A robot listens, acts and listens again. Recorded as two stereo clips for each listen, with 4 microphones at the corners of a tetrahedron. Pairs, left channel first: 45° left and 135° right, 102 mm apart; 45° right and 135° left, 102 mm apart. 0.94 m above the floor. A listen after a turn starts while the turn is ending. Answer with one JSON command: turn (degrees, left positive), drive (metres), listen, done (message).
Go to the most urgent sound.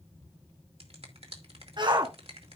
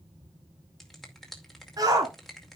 {"turn": -175}
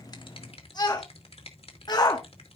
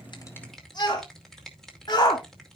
{"drive": 1.0}
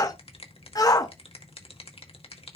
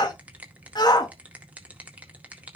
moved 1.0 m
{"drive": 1.0}
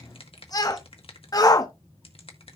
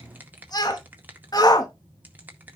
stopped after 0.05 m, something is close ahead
{"done": "I am next to the shout."}